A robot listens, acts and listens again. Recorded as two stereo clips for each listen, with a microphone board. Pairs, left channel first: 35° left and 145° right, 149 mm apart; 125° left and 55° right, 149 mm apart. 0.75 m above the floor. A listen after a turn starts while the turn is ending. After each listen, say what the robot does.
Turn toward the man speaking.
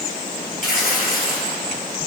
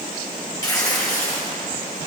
Keep listening.
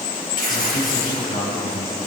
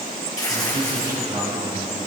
Turn 10° left.
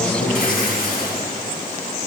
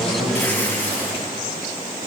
Found it: a man speaking, straight ahead.